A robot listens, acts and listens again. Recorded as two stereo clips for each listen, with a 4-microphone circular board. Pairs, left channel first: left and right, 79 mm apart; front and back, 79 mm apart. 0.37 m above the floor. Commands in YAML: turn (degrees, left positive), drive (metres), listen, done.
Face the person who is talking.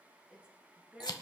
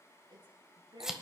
turn: -165
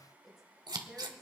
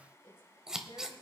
done: "Facing the woman speaking, over 4 m away."